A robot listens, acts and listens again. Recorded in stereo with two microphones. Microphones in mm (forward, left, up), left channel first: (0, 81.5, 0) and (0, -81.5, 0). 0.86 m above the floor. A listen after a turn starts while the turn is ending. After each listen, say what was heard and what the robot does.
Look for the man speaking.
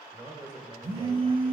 The man speaking: about 30° right or 150° right. Turn 30° right.
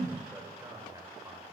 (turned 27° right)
The man speaking: about 25° right or 155° right. Turn 25° right.
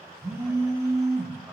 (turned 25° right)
Keep listening.
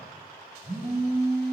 Keep listening.
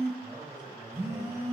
The man speaking: about 25° right or 155° right. Turn 25° right.
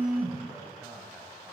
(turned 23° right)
Facing the man speaking, over 4 m away.